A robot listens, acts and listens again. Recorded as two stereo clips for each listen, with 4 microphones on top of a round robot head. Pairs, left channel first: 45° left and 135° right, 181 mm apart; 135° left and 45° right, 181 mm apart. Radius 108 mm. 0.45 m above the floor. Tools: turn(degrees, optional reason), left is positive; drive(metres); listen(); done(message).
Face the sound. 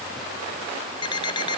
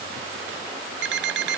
turn(degrees=-25, reason="The alarm clock: 25° right.")
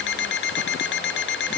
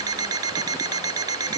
turn(degrees=25, reason="The alarm clock is now 25° left.")
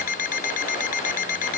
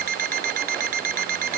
done("Found it: an alarm clock, straight ahead.")